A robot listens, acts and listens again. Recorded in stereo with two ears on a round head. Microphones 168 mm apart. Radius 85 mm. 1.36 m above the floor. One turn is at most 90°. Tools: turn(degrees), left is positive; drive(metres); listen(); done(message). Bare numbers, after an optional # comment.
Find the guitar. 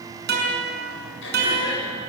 # The guitar: about 60° right or 120° right.
turn(-60)
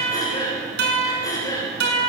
# So it is at 60° right.
turn(-60)
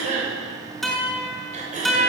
done("Found it: a guitar, straight ahead, over 4 m away.")